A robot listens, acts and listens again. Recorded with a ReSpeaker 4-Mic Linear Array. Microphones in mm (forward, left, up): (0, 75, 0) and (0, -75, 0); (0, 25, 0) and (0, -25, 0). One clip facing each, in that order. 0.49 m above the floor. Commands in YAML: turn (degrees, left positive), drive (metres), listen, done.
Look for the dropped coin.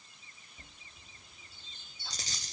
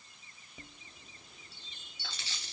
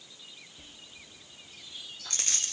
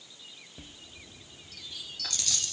turn: 40
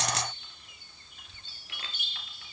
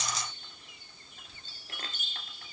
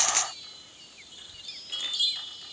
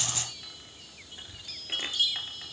turn: 100
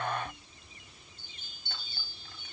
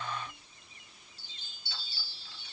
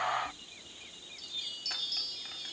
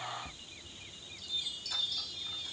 done: "Facing where the dropped coin came from. I can't hear it now."